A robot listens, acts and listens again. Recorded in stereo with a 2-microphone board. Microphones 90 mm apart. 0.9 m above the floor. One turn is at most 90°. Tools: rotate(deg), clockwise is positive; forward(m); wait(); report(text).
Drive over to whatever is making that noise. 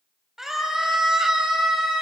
rotate(30)
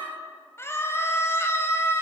rotate(-30)
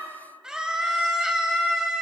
forward(1.0)
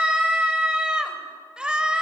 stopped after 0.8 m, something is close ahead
rotate(10)
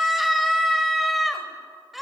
report("Something is in my way. I am facing the scream but have not reached it.")